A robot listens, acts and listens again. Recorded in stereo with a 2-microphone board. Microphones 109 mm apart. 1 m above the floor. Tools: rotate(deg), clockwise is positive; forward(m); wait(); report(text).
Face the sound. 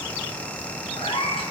rotate(-60)
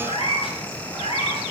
rotate(-65)
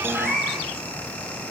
report("Facing the cat meowing, over 4 m away.")